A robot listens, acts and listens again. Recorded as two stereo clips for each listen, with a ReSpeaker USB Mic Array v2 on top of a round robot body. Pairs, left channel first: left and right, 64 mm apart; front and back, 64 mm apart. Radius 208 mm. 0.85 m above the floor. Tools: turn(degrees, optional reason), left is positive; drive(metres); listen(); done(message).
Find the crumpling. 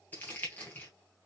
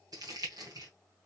turn(degrees=155, reason="The crumpling: 155° left.")
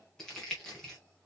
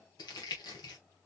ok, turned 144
turn(degrees=10, reason="The crumpling is now 10° left.")
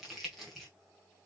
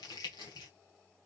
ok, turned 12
done("Found it: crumpling, straight ahead, under 1 m away.")